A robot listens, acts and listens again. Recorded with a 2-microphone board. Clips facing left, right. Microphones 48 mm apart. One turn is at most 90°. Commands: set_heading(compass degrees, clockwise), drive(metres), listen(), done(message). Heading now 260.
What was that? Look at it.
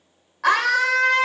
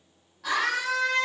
set_heading(170)
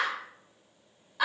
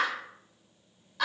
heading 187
set_heading(177)
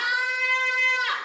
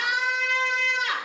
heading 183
done("Found it: a scream, straight ahead, over 4 m away.")